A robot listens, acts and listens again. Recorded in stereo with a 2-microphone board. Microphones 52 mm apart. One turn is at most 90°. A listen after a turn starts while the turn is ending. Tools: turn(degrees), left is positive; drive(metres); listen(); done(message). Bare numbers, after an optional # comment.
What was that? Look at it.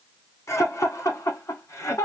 # The laughter: about 70° left or 110° left.
turn(70)
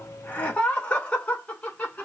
# So it is at 30° left.
turn(30)
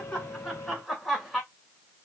done("Facing the laughter.")